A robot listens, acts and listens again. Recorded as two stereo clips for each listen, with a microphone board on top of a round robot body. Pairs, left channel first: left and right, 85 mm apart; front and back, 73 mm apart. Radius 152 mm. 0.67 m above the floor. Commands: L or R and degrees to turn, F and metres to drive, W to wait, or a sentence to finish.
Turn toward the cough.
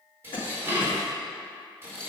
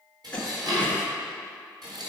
L75
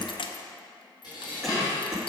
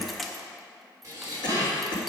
Found it: a cough, straight ahead, 2 to 4 m away.